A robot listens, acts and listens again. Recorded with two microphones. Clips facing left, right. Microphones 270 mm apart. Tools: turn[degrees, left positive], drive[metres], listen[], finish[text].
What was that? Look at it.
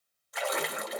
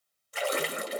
Thought: The splash: about 35° right or 145° right.
Action: turn[-35]
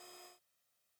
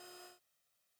Action: listen[]
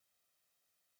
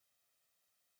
Action: finish[I heard a splash, but can't make it out now. It was about straight ahead or 110° right.]